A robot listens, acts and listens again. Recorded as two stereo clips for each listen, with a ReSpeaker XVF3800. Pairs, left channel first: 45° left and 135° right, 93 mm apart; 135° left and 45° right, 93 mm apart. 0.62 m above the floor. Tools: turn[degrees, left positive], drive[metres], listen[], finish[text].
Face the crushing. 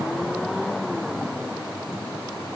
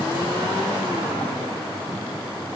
Action: listen[]
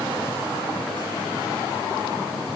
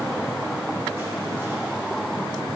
Action: listen[]
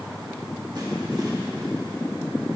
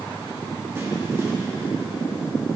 Action: finish[I can't make out crushing to turn to.]